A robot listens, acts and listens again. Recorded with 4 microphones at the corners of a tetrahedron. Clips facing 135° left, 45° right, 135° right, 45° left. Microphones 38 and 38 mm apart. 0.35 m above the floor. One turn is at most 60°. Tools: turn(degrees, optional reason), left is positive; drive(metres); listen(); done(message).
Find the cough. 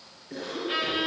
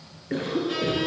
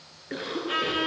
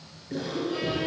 turn(degrees=-60, reason="The cough: 85° right.")
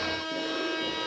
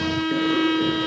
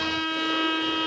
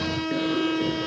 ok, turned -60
turn(degrees=-25, reason="Nothing new. It was at 25° right.")
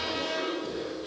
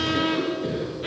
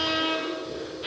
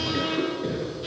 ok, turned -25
done("Facing the cough, over 4 m away.")